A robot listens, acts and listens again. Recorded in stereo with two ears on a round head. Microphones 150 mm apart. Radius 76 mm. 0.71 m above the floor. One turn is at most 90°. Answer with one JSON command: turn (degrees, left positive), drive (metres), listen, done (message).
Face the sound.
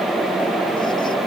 {"listen": true}
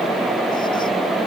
{"listen": true}
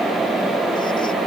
{"done": "I can't make out anything to turn to."}